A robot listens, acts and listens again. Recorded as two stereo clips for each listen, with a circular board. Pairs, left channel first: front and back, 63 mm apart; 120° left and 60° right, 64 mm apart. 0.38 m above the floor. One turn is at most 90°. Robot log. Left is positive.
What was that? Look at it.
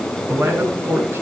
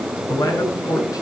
note: The man speaking: 135° left.
cmd yaw +90
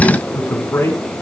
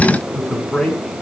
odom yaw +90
note: The man speaking is now 45° left.
cmd yaw +45
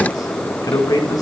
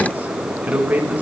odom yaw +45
end: Found it: a man speaking, straight ahead.